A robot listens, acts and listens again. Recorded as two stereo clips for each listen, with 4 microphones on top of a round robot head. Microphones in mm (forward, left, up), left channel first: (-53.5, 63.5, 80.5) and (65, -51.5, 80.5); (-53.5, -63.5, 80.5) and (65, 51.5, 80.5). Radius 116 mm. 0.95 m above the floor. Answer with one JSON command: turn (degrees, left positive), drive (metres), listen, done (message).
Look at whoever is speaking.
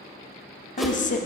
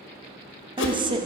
{"turn": 100}
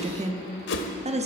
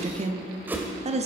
{"done": "Found it: a woman speaking, straight ahead."}